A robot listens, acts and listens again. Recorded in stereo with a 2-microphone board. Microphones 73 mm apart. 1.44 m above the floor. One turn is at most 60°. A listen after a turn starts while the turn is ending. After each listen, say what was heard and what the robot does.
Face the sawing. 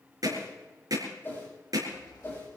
The sawing: about 65° left or 115° left. Turn 60° left.
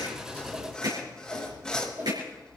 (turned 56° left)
So it is at 10° left. Turn 10° left.
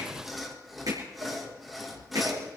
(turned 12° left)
Facing the sawing.